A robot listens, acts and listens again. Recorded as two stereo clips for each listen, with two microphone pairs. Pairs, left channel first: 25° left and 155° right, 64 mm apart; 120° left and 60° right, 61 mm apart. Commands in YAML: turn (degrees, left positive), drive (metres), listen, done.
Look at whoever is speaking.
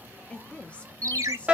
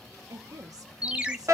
turn: -45
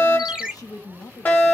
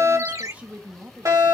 done: "Facing the woman speaking, 1 to 2 m away."